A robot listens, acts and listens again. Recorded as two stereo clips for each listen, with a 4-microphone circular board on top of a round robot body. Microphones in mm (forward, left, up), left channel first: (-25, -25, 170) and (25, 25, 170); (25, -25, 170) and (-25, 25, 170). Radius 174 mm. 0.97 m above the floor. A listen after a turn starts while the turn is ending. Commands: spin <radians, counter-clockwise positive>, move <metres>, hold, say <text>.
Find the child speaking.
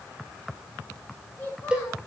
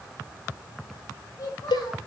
spin -1.22
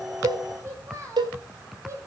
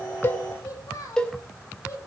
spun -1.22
say Facing the child speaking.